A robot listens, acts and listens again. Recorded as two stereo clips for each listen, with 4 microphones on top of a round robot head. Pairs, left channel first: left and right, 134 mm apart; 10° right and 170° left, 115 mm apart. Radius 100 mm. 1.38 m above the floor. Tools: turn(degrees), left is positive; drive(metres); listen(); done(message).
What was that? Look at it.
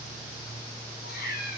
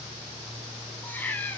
turn(degrees=70)
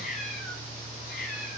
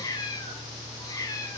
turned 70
turn(degrees=55)
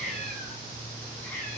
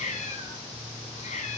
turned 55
turn(degrees=10)
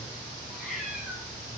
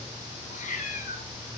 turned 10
done("Facing the cat meowing.")